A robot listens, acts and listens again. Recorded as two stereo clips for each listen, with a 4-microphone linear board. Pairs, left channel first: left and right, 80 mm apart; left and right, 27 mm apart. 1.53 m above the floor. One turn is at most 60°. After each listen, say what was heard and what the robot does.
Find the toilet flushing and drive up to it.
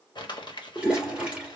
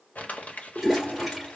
Turn 30° right.
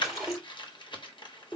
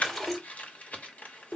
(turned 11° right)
Drive 1.0 m forward.
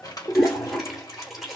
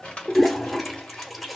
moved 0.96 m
Drive 1.0 m forward.
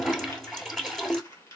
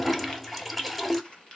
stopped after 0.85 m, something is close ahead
Arrived at the toilet flushing, straight ahead.